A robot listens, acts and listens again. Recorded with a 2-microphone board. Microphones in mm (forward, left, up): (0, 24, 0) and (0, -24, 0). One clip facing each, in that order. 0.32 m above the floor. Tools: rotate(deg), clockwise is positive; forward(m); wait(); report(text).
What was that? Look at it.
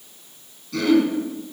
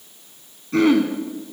rotate(30)
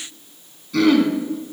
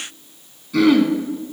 report("Facing the throat clearing.")